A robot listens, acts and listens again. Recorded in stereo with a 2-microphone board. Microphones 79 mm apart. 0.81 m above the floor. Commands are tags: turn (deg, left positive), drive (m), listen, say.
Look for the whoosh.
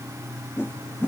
<turn deg="25"/>
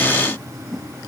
<say>Found it: a whoosh, straight ahead.</say>